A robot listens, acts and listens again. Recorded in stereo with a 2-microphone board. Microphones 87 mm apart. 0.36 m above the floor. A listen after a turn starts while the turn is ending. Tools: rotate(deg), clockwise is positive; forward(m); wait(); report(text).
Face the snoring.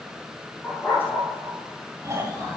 rotate(35)
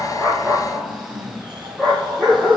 rotate(110)
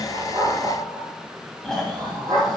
report("Found it: snoring, straight ahead.")